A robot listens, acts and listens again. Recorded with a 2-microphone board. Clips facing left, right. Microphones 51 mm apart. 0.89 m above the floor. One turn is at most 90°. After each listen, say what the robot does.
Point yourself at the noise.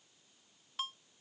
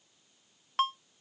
Turn 65° right.
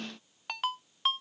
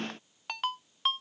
Found it: a ringtone, straight ahead.